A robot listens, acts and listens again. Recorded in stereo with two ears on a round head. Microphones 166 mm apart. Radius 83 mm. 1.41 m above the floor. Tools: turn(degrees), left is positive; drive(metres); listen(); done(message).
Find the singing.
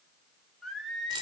turn(degrees=30)
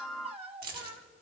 turn(degrees=-35)
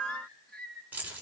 done("Found it: singing, straight ahead, 2 to 4 m away.")